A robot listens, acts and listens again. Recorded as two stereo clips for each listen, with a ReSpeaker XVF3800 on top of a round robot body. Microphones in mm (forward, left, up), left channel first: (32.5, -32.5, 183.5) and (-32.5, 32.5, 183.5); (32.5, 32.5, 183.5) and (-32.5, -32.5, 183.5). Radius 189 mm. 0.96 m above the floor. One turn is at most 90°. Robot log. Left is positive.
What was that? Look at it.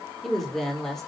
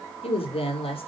note: The woman speaking: 40° left.
cmd yaw +40
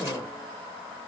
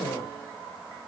cmd idle
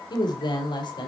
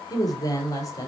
note: The woman speaking is now 10° right.
cmd yaw -10
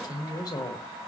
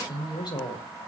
end: Found it: a woman speaking, straight ahead, over 4 m away.